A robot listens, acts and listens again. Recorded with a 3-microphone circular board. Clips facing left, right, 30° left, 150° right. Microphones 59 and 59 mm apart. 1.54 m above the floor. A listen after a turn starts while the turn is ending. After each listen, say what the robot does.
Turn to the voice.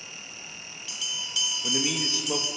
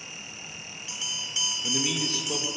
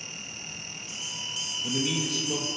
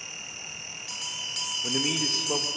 Turn 165° left.
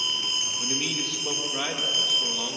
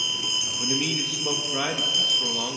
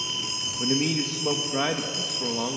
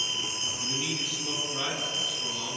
Turn 15° right.
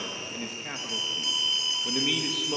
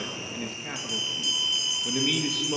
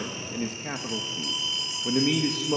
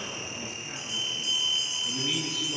Facing the man speaking, 1 to 2 m away.